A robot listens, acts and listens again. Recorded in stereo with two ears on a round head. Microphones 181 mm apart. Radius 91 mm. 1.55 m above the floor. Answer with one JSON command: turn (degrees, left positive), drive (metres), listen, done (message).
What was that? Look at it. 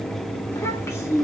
{"turn": 15}
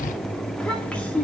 {"turn": 30}
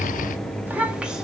{"done": "Facing the child speaking, 1 to 2 m away."}